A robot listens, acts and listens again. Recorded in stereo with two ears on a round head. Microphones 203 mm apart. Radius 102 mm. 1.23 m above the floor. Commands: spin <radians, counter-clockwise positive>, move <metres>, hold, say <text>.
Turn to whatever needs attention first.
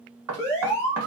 spin 0.52
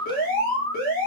spin 2.36
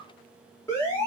spin 0.26
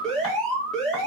say Facing the alarm, 1 to 2 m away.